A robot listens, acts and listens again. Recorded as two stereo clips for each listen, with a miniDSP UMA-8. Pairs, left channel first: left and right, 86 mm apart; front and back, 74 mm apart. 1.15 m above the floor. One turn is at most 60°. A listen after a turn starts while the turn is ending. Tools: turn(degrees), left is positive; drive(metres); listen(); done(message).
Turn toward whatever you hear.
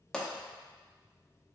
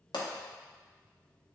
turn(degrees=10)
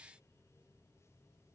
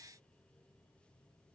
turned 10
done("Facing where the pop came from. I can't hear it now.")